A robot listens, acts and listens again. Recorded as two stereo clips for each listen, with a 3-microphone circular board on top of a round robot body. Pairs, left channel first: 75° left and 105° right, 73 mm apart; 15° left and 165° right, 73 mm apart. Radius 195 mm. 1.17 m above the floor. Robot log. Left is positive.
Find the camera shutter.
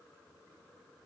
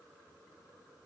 cmd idle
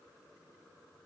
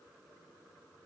cmd idle
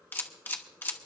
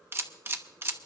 note: The camera shutter: 135° left.
cmd yaw +135
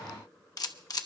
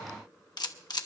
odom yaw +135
note: The camera shutter is now 40° left.
cmd yaw +40
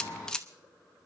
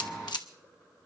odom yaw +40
end: Found it: a camera shutter, straight ahead, 1 to 2 m away.